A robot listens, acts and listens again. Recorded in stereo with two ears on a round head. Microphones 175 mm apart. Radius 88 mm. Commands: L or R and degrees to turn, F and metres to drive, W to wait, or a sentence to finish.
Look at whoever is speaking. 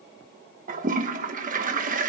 W
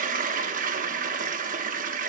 W
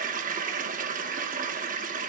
I can't make out anyone speaking to turn to.